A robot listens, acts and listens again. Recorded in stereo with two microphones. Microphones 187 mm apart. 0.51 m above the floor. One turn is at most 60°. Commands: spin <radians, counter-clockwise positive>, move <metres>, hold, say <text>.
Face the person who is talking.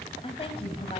spin 0.52
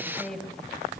say Facing the woman speaking.